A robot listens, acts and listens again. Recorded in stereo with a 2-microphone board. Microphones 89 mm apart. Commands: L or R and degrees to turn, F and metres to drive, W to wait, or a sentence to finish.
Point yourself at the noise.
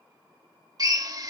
R45
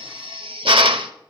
R90
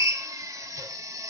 R40
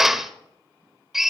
Facing the drill.